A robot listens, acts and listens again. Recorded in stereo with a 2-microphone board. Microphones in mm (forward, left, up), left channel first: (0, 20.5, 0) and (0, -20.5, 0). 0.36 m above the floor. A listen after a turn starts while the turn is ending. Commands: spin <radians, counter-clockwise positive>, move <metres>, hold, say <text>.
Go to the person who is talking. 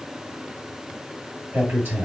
spin -1.13
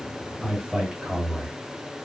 spin -0.44
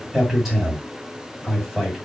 move 1.0
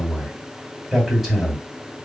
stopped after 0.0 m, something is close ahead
say Something is in my way. I am facing the man speaking but have not reached it.